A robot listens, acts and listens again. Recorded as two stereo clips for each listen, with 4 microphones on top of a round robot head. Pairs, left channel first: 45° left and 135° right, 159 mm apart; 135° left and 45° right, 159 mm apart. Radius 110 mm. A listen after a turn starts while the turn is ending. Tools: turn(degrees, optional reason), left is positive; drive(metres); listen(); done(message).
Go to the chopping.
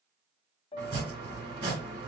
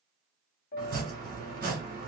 turn(degrees=-75, reason="The chopping: 75° right.")
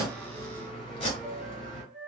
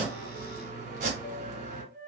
turn(degrees=-10, reason="The chopping is now 10° right.")
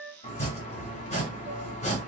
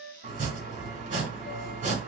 drive(metres=1.0)
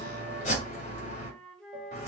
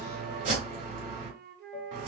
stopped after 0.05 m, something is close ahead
done("Blocked. The chopping is further on, straight ahead.")